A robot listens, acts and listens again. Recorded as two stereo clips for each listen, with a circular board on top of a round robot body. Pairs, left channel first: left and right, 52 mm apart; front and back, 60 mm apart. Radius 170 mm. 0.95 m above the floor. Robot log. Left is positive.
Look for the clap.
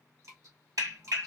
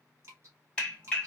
note: The clap: 75° right.
cmd yaw -75
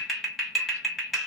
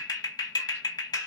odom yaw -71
end: Found it: a clap, straight ahead, 1 to 2 m away.